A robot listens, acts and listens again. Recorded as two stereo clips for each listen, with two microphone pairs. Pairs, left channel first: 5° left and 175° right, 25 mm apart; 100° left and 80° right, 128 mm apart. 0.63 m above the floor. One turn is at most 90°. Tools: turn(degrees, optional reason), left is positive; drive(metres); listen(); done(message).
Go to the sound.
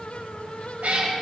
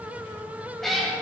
turn(degrees=-90, reason="The cat meowing: 175° right.")
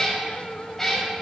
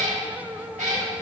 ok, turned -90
turn(degrees=-70, reason="The cat meowing is now 70° right.")
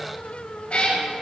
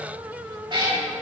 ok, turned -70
turn(degrees=-30, reason="The cat meowing is now 30° right.")
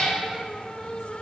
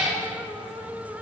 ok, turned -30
drive(metres=1.0)
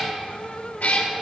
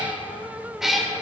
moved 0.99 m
turn(degrees=10, reason="The cat meowing is now 10° left.")
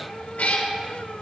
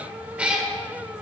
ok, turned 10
drive(metres=1.0)
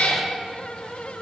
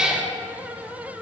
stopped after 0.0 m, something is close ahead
done("Arrived at the cat meowing, straight ahead.")